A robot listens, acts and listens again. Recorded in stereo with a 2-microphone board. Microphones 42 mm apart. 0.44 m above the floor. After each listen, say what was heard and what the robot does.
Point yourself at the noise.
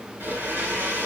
The blender: about 60° right or 120° right. Turn 60° right.
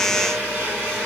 So it is at 45° right. Turn 45° right.
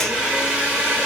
Found it: a blender, straight ahead, 2 to 4 m away.